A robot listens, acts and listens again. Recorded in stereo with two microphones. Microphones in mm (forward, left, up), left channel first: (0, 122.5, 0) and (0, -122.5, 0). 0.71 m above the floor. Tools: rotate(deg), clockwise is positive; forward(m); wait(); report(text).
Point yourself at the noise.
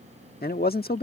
rotate(-40)
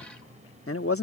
rotate(-95)
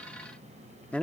report("Found it: a man speaking, straight ahead.")